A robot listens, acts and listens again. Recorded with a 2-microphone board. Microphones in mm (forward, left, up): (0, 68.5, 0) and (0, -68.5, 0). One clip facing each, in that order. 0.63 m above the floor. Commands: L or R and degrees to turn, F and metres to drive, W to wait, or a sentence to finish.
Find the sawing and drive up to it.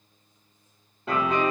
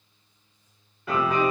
W
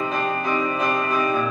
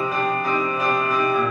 W
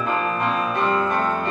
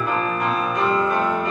I can't make out sawing to turn to.